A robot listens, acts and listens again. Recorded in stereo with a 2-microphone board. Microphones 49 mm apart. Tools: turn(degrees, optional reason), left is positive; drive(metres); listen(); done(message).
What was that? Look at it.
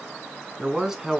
turn(degrees=-30)
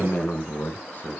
turn(degrees=40, reason="So it is at 40° left.")
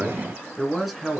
done("Found it: a man speaking, straight ahead.")